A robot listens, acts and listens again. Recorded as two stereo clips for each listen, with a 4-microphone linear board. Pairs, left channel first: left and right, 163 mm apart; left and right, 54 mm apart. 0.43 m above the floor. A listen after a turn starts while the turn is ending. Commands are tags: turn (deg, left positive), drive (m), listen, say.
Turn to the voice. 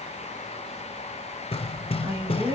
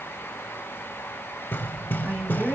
<turn deg="-25"/>
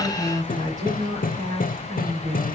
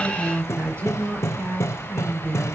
<turn deg="-130"/>
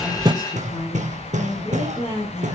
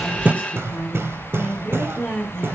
<turn deg="40"/>
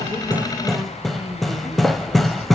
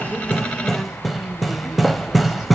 <turn deg="-10"/>
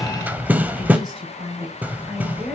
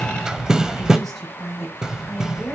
<say>Facing the woman speaking.</say>